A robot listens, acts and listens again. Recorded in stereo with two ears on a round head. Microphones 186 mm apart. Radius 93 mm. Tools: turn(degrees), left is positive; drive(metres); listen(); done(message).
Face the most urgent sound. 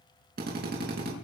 listen()
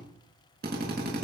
listen()
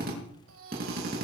turn(degrees=-70)
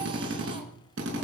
listen()
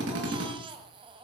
turn(degrees=-25)
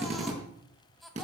done("Found it: a baby crying, straight ahead.")